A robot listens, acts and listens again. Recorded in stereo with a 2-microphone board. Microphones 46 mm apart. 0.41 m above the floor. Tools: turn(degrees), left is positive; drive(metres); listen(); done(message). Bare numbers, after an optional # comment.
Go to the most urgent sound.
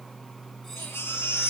# The baby crying: about 65° left or 115° left.
turn(65)
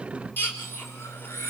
# So it is at 50° left.
turn(50)
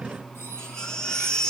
# The baby crying is now 15° left.
turn(15)
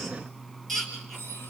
drive(1.0)
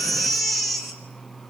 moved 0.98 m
drive(1.0)
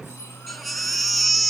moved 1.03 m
drive(1.0)
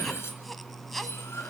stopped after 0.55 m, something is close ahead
listen()
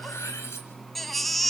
done("I am next to the baby crying.")